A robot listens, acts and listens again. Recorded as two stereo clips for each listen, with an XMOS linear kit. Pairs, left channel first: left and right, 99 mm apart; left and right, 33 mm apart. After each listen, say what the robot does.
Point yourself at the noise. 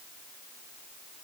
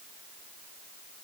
Keep listening.
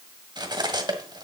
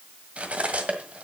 Turn 40° right.
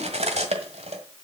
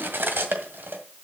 Turn 100° right.
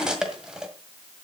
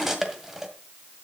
Facing the cutlery clinking, 1 to 2 m away.